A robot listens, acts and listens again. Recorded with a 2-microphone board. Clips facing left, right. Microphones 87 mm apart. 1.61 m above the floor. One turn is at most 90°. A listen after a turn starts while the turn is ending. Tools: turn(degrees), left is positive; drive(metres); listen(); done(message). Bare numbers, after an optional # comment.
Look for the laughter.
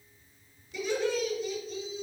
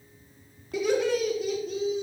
# The laughter: about 75° right or 105° right.
turn(-75)
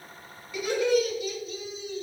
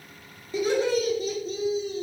# So it is at 45° right.
turn(-45)
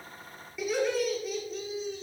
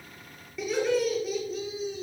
done("Found it: laughter, straight ahead, over 4 m away.")